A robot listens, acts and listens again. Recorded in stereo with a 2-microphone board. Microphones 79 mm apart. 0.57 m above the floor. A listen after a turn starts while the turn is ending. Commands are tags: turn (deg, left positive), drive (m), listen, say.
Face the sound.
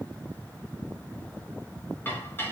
<turn deg="25"/>
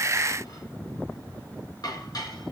<turn deg="125"/>
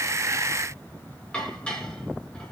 <turn deg="15"/>
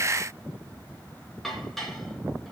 <say>Found it: dishes clattering, straight ahead, over 4 m away.</say>